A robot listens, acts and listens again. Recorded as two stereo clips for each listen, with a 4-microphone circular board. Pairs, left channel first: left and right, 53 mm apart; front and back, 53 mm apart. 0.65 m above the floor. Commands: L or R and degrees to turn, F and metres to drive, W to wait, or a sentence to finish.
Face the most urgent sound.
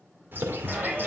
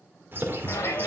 R30
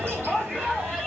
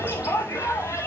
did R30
R15
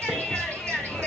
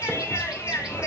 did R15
Found it: a shout, straight ahead, 2 to 4 m away.